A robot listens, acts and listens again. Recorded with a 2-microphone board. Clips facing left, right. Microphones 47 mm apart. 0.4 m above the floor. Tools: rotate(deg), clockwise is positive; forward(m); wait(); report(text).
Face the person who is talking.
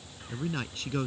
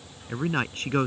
rotate(45)
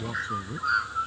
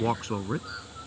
rotate(90)
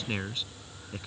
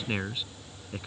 rotate(10)
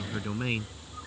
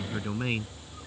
report("Facing the man speaking.")